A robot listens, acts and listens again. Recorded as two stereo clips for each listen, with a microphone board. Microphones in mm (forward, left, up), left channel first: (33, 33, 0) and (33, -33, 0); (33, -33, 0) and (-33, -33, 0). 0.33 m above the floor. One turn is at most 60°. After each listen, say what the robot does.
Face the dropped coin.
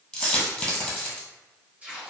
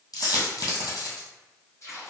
Turn 15° left.
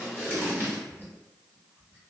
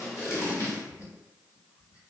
I heard a dropped coin from this way, but can't make it out now.